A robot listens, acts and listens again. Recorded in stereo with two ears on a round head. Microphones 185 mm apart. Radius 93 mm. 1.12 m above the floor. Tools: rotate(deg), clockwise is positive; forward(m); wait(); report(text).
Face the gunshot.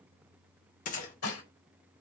rotate(-40)
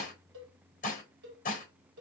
wait()
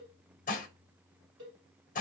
report("I heard a gunshot, but can't make it out now. It was about straight ahead or 100° left.")